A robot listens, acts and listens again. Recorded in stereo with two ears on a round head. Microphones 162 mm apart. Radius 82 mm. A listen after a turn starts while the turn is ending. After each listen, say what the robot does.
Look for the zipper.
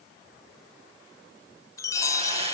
Keep listening.
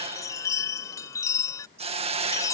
Keep listening.
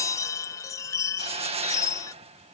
I can't make out a zipper, only a hiss and a chime.